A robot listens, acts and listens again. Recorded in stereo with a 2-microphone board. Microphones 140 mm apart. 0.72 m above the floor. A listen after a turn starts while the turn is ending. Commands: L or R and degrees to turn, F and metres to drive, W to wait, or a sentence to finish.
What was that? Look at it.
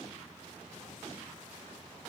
W
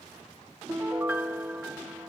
R30
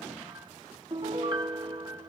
R140
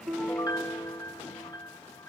L35
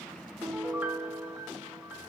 R20
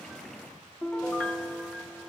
Found it: a piano, straight ahead.